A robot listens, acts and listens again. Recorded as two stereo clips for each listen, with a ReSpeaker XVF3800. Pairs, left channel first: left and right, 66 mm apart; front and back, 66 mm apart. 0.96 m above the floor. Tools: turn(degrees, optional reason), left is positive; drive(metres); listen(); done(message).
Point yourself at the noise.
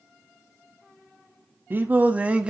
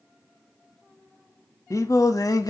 turn(degrees=-15, reason="The singing: 15° right.")
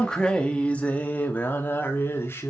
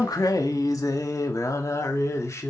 turn(degrees=40, reason="The singing is now 40° left.")
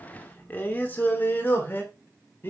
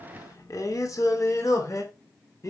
turn(degrees=35, reason="The singing is now 35° left.")
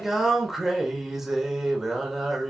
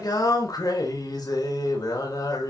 done("Facing the singing.")